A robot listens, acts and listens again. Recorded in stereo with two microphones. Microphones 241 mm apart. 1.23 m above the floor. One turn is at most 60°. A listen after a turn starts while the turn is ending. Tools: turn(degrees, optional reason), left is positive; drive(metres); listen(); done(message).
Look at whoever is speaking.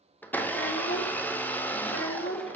turn(degrees=60, reason="The child speaking: about 60° left or 120° left.")
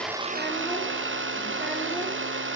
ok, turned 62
listen()
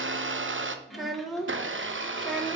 done("Found it: a child speaking, straight ahead.")